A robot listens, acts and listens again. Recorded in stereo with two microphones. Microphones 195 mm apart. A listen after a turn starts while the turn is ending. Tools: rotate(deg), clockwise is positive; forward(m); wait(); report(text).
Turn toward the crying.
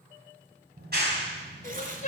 rotate(-40)
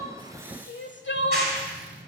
rotate(-100)
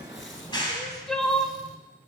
report("Found it: crying, straight ahead, under 1 m away.")